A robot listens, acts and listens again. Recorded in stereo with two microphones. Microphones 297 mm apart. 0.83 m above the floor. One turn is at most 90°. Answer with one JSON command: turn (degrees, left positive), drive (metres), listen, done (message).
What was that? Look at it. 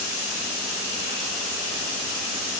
{"listen": true}
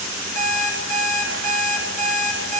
{"turn": 70}
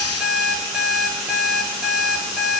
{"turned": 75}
{"done": "Found it: an alarm clock, straight ahead, 1 to 2 m away."}